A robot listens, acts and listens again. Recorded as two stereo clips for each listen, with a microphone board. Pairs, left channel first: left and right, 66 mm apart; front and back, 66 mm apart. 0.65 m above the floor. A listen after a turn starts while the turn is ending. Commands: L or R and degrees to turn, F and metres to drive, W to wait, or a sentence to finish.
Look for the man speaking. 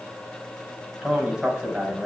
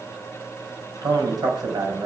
R175
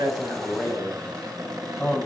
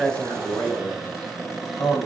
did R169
Facing the man speaking.